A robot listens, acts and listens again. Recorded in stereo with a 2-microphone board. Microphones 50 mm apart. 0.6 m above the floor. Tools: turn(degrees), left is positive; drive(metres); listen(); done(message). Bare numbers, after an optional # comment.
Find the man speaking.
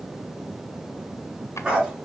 listen()
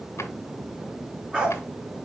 listen()
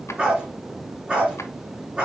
done("I can't make out a man speaking to turn to.")